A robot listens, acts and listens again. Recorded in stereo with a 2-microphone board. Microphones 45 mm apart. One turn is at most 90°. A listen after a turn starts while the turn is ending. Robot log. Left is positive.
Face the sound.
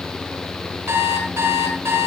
cmd yaw -90
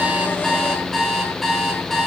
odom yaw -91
end: Facing the alarm clock, over 4 m away.